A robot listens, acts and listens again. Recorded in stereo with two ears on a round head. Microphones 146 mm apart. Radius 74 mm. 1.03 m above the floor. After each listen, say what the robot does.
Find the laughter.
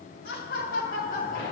Turn 50° left.
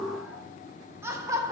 Turn 20° right.
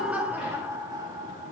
Turn 25° right.
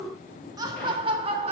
Turn 35° right.
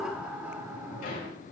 Turn 10° right.
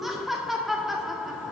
Found it: laughter, straight ahead, 1 to 2 m away.